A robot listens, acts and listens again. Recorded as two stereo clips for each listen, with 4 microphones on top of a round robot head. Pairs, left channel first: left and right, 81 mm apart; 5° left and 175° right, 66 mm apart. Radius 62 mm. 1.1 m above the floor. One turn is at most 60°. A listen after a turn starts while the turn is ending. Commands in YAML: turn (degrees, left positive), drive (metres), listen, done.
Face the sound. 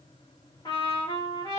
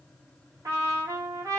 turn: 60
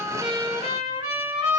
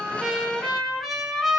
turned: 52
turn: 60
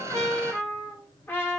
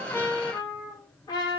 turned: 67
turn: 25
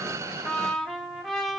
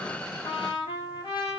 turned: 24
done: "Found it: a trumpet, straight ahead."